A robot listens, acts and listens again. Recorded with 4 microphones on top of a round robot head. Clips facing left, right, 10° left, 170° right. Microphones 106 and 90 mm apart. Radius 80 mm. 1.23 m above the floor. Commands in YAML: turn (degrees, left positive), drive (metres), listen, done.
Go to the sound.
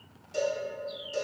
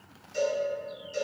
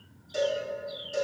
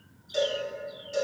turn: 95
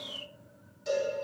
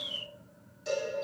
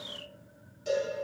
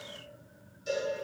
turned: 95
drive: 1.0
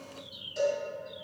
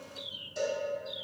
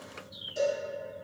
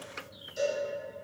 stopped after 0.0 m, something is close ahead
done: "Blocked. The cowbell is further on, straight ahead."